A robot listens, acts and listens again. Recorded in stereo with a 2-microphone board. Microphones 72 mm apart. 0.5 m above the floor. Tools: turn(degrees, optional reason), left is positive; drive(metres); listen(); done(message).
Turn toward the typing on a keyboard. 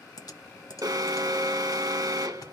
turn(degrees=60, reason="The typing on a keyboard: about 60° left or 120° left.")
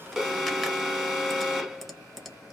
done("Facing the typing on a keyboard, under 1 m away.")